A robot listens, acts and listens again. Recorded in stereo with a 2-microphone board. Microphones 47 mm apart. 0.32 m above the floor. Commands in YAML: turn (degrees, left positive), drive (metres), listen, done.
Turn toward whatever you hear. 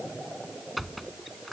turn: 30
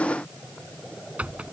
turn: -35
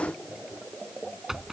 turn: -10
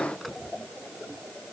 listen: true
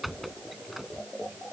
done: "Facing the squeak."